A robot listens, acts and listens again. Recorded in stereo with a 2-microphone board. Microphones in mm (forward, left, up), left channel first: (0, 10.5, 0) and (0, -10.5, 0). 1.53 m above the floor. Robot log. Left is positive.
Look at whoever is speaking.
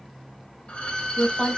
note: The woman speaking: about 65° left or 115° left.
cmd yaw +65
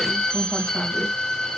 cmd idle
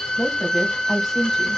end: Found it: a woman speaking, straight ahead, 1 to 2 m away.